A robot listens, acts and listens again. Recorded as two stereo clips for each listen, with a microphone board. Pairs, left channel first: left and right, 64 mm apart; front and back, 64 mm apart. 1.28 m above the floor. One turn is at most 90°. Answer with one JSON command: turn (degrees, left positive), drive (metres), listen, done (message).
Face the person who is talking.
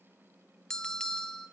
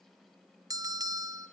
{"listen": true}
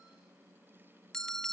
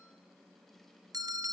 {"listen": true}
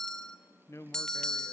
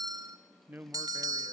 {"turn": 90}
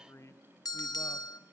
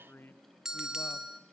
{"turn": 50}
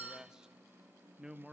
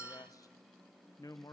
{"turn": -10}
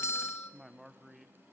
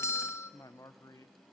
{"done": "Found it: a man speaking, straight ahead."}